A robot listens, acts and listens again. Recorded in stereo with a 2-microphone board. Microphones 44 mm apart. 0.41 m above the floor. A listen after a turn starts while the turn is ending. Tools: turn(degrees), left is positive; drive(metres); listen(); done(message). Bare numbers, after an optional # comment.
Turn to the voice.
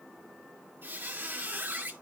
listen()
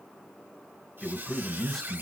turn(30)
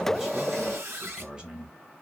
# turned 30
# So it is at 25° right.
turn(-25)
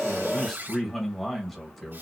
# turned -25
done("Facing the man speaking.")